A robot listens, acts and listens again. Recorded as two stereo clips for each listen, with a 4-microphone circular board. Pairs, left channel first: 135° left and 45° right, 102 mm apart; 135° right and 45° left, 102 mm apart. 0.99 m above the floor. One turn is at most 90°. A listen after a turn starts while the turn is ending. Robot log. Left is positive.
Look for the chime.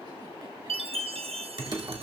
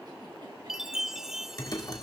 note: The chime: 40° right.
cmd yaw -40
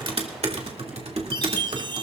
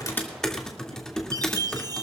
end: Found it: a chime, straight ahead.